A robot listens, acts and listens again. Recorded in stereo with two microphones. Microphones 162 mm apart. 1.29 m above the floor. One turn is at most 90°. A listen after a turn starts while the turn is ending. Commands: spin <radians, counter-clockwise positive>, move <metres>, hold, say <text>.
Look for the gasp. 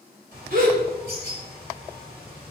spin -1.13
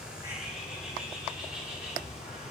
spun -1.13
hold
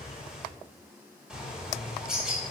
say I heard a gasp, but can't make it out now. It was about straight ahead or 50° right.